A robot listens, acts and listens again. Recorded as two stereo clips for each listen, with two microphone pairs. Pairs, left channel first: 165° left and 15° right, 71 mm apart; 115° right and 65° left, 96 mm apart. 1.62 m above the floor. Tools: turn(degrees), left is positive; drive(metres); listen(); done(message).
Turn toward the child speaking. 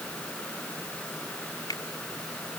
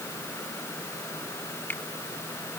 listen()
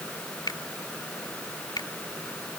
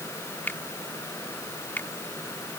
listen()
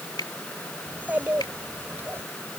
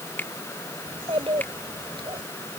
turn(degrees=45)
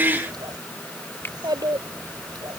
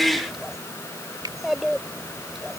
turn(degrees=-25)
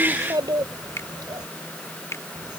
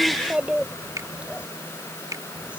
turn(degrees=-15)
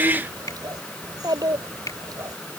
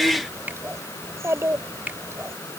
done("Facing the child speaking.")